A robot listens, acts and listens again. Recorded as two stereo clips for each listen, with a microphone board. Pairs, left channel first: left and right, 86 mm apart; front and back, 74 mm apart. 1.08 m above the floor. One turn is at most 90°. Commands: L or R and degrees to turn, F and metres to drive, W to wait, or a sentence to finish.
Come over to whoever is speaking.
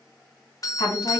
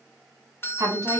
L90
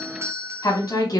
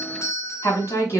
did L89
L55
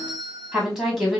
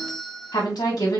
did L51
F1.0
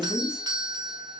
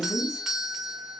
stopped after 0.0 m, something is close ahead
Something is in my way. I am facing the woman speaking but have not reached it.